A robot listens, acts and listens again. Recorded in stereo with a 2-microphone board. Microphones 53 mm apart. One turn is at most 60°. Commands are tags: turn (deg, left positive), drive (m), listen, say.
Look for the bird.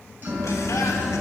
<turn deg="30"/>
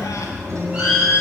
<turn deg="-20"/>
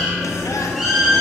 <say>Facing the bird.</say>